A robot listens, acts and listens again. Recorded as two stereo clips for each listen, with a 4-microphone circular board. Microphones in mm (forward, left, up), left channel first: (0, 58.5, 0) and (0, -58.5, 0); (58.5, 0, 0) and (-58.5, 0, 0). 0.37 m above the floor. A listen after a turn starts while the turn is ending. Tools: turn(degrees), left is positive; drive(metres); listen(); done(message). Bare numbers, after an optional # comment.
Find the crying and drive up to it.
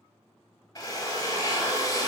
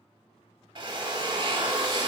listen()
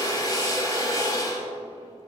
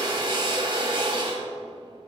listen()
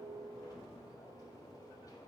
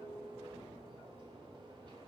done("I can't make out crying, only a drill.")